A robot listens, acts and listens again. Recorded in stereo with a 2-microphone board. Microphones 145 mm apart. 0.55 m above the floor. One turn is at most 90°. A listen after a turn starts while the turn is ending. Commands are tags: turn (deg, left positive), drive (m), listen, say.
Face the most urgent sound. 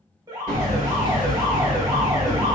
<turn deg="-30"/>
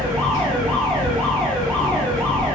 <listen/>
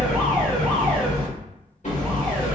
<listen/>
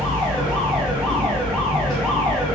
<say>I heard an alarm, but can't make it out now. It was about straight ahead or 120° right.</say>